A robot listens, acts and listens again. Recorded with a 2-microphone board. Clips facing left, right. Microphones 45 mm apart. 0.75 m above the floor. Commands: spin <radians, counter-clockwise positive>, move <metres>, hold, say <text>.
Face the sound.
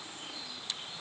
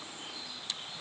hold
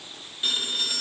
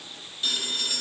spin 0.52
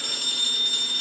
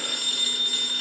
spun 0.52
spin -0.26
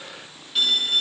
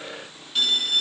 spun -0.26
say Facing the phone ringing.